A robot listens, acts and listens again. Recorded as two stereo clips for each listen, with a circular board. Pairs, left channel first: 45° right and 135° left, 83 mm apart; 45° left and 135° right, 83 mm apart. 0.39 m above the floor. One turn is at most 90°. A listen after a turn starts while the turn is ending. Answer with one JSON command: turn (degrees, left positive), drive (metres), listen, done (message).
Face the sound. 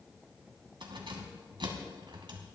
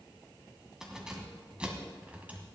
{"turn": 90}
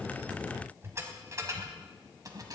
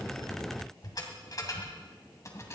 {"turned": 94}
{"turn": 90}
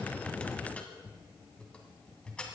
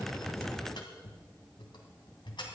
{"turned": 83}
{"turn": 35}
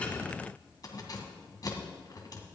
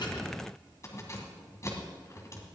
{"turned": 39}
{"done": "Facing the keys jangling, 2 to 4 m away."}